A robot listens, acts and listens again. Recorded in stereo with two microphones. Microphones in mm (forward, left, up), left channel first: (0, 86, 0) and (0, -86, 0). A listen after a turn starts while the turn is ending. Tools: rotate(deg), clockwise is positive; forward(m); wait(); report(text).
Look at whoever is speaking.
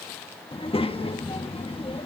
rotate(-35)
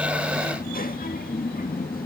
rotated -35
rotate(-110)
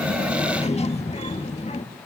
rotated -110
rotate(-45)
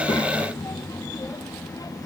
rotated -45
rotate(-25)
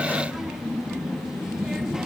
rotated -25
report("Facing the child speaking.")